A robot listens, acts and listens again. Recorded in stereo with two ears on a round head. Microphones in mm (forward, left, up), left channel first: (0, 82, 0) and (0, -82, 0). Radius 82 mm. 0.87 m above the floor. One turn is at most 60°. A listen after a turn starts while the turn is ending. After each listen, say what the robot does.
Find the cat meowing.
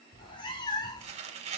Turn 20° left.
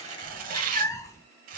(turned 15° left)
Turn 15° left.
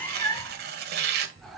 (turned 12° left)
Turn 30° left.
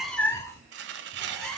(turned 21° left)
Turn 30° left.
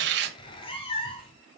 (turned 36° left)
Turn 60° left.
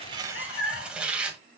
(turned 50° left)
Turn 60° left.
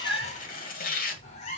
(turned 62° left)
Turn 40° left.
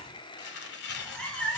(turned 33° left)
Facing the cat meowing.